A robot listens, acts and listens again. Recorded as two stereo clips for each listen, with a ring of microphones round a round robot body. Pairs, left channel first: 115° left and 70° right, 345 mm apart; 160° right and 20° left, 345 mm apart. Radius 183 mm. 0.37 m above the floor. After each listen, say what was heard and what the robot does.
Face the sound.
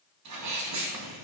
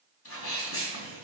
The sneeze: 105° right. Turn 105° right.
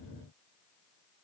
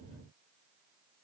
I heard a sneeze from this way, but can't make it out now.